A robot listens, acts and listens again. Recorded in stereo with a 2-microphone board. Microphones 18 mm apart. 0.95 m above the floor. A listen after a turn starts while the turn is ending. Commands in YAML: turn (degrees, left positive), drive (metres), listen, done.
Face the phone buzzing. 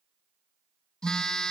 turn: 50
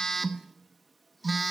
done: "Found it: a phone buzzing, straight ahead, under 1 m away."